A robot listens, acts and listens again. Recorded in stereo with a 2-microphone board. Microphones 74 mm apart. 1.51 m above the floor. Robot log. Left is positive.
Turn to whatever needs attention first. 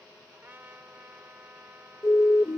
note: The siren: about 40° left or 140° left.
cmd yaw +40
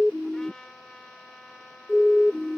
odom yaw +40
end: Facing the siren.